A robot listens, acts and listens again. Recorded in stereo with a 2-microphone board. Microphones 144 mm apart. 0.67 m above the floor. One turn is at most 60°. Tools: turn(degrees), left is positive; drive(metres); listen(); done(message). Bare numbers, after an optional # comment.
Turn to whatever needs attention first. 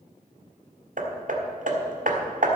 listen()
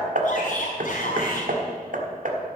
# The shout: about 65° left or 115° left.
turn(60)
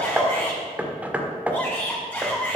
# So it is at 15° left.
turn(15)
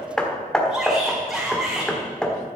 done("Facing the shout.")